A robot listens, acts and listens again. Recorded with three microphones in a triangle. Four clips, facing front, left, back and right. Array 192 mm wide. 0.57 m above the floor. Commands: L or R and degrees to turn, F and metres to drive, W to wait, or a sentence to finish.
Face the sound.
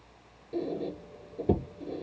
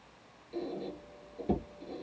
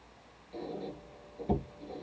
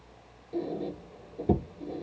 R25
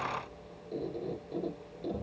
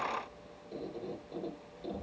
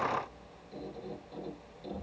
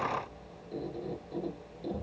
Facing the squeak, 2 to 4 m away.